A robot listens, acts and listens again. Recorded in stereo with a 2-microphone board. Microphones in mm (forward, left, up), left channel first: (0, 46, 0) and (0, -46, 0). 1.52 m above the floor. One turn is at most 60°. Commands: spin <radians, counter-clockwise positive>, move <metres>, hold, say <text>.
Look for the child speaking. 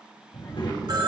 spin 1.05
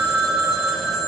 hold
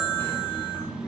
spin 0.44
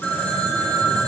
hold
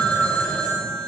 hold
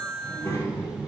spin 0.44
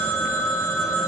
hold
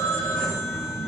say Found it: a child speaking, straight ahead.